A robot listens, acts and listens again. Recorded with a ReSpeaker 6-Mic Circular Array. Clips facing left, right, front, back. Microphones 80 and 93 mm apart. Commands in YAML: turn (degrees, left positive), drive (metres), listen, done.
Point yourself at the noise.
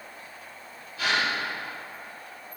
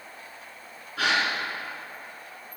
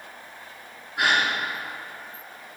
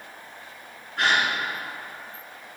turn: -80
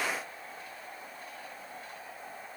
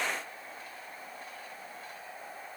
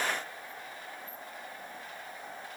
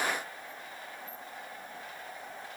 done: "Facing where the gasp came from. I can't hear it now."